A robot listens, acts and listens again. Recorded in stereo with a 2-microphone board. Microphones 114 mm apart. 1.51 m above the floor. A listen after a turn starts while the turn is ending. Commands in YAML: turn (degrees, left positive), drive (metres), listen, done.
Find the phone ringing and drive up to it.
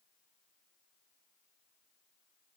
listen: true
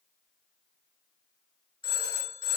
turn: 45
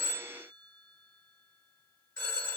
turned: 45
drive: 1.0
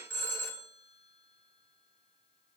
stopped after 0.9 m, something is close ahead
turn: 20
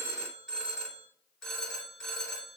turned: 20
done: "I am next to the phone ringing."